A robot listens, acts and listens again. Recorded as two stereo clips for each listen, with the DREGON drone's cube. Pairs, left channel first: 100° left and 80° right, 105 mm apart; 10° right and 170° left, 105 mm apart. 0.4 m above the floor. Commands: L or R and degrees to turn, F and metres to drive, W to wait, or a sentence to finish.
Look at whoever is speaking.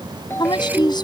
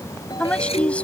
L65
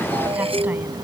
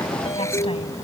W
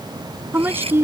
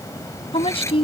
R15
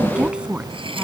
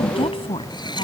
Found it: a woman speaking, straight ahead.